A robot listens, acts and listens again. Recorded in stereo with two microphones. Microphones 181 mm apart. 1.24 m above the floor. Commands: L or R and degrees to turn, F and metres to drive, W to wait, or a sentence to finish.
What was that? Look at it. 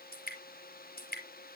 L60
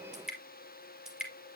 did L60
Found it: dripping, straight ahead, 2 to 4 m away.